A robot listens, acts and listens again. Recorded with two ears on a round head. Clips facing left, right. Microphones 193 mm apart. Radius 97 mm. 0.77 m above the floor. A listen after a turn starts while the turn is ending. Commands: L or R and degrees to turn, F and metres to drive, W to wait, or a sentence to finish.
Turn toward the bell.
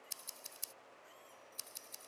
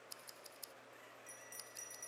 R90
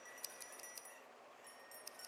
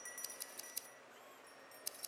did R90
L10
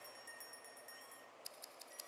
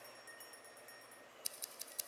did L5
Facing the bell.